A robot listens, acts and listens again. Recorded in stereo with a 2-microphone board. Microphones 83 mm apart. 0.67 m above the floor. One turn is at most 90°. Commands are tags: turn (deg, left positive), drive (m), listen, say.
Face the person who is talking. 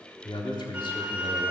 <turn deg="60"/>
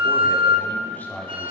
<turn deg="25"/>
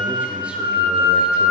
<listen/>
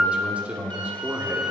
<turn deg="-15"/>
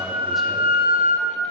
<listen/>
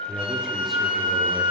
<say>Found it: a man speaking, straight ahead, 1 to 2 m away.</say>